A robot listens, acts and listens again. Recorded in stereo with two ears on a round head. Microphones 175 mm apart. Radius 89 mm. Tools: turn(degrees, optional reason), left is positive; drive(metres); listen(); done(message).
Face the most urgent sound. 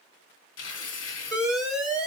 turn(degrees=-30)
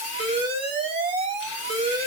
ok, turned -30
turn(degrees=-145, reason="So it is at 145° right.")
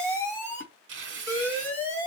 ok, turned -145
turn(degrees=10, reason="The alarm is now 10° left.")
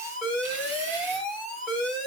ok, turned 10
done("Found it: an alarm, straight ahead, 2 to 4 m away.")